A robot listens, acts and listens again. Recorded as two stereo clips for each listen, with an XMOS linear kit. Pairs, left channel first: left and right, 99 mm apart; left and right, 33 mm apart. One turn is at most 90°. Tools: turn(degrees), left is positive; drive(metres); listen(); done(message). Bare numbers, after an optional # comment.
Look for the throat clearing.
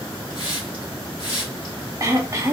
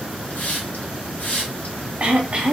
# The throat clearing: about 35° right or 145° right.
turn(-35)
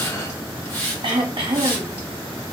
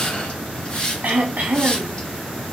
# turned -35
# So it is at 110° right.
turn(-90)
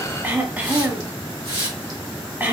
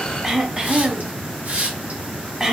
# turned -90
# The throat clearing is now 20° right.
turn(-20)
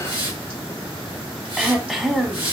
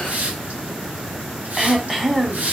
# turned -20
done("Facing the throat clearing, under 1 m away.")